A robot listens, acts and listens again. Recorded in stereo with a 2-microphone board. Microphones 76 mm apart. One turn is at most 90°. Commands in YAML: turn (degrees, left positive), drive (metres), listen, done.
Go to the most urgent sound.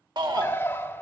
turn: -90
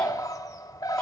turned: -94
listen: true
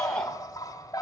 turn: 10
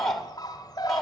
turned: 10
drive: 1.0
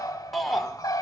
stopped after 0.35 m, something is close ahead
done: "Blocked. The shout is further on, straight ahead."